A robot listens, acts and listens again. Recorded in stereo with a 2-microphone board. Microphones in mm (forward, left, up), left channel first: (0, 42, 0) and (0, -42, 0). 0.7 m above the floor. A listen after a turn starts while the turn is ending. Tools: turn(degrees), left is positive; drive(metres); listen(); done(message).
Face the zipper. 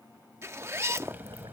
turn(degrees=-30)
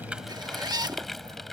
turn(degrees=-115)
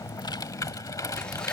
listen()
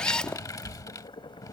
turn(degrees=10)
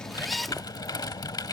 done("Found it: a zipper, straight ahead.")